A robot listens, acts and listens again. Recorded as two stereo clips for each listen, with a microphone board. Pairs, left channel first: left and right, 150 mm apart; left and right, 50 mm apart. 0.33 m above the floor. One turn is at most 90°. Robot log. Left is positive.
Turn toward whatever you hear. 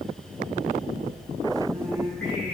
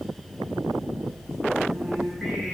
cmd yaw +30
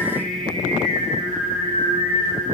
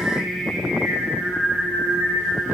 note: So it is at 110° left.
cmd yaw +90
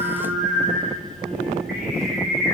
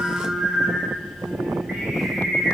end: Found it: singing, straight ahead, 2 to 4 m away.